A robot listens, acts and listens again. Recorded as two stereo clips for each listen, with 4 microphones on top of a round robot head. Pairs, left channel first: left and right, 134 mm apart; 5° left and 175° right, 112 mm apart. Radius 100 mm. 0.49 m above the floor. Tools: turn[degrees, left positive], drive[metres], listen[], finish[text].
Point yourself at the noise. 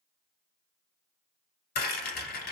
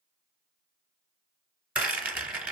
Thought: The rattle: 105° left.
Action: turn[105]
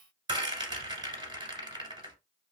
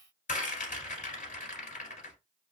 Thought: The rattle is now 30° right.
Action: turn[-30]
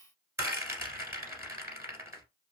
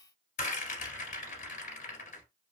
Thought: The rattle is now 20° right.
Action: turn[-20]
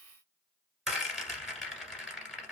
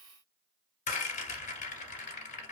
Action: finish[Facing the rattle, 1 to 2 m away.]